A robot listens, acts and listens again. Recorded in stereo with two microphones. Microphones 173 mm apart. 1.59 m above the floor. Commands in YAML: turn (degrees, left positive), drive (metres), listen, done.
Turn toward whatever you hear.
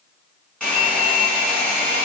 turn: 30
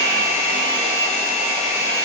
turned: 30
turn: -20
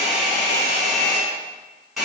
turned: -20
done: "Found it: a hair dryer, straight ahead."